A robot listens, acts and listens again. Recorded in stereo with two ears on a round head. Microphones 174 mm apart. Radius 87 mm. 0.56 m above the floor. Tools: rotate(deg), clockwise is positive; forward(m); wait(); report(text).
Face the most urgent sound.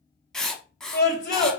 rotate(-50)
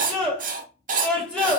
report("Facing the scream, 2 to 4 m away.")